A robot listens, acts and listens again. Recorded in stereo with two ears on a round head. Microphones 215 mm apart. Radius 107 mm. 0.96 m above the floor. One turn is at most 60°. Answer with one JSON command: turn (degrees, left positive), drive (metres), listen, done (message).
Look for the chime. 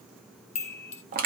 {"turn": 30}
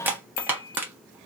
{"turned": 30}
{"turn": 60}
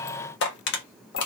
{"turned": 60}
{"turn": 55}
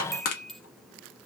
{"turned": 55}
{"done": "Facing the chime."}